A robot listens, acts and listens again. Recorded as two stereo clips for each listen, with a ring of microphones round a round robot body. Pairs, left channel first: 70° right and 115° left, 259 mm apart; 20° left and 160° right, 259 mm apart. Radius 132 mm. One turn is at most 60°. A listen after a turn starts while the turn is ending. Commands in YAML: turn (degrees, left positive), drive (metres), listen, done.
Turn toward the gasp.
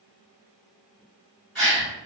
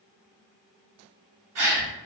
turn: -60
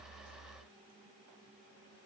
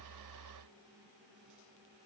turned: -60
turn: -60
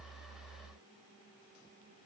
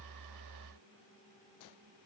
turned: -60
turn: -35
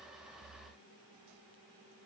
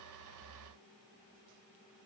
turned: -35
done: "I heard a gasp from this way, but can't make it out now."